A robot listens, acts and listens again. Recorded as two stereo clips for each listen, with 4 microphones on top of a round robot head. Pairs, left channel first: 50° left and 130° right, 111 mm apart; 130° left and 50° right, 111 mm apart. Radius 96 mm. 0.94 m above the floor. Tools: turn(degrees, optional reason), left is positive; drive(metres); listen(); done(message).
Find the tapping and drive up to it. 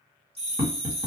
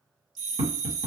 turn(degrees=-65, reason="The tapping: 65° right.")
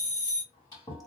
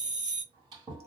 listen()
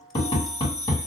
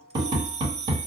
drive(metres=1.0)
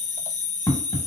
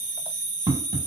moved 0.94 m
drive(metres=1.0)
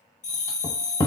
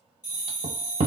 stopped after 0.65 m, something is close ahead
turn(degrees=-10, reason="The tapping is now 10° right.")
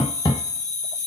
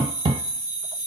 done("I am next to the tapping.")